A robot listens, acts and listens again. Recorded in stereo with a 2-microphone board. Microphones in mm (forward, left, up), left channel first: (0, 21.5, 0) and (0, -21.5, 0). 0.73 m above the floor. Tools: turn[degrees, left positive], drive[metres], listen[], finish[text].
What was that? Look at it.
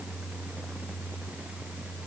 Action: listen[]
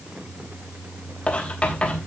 Thought: The writing: about 25° left or 155° left.
Action: turn[25]
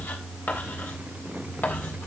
Thought: So it is at 130° left.
Action: turn[130]
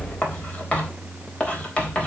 Thought: The writing is now 30° left.
Action: turn[30]
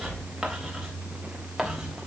Action: finish[Facing the writing, 2 to 4 m away.]